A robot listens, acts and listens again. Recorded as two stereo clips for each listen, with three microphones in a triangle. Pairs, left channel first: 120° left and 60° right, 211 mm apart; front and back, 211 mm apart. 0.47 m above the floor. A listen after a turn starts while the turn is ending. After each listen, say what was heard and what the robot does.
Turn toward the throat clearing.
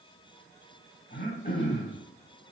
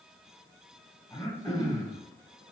The throat clearing: 75° left. Turn 75° left.
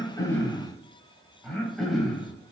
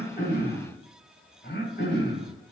The throat clearing is now 30° left. Turn 30° left.
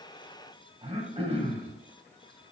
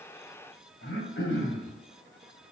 Facing the throat clearing, 2 to 4 m away.